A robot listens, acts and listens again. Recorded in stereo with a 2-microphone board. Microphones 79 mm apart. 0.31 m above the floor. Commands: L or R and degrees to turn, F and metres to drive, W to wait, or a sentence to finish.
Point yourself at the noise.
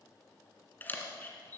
L25
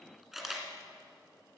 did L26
Found it: a camera shutter, straight ahead.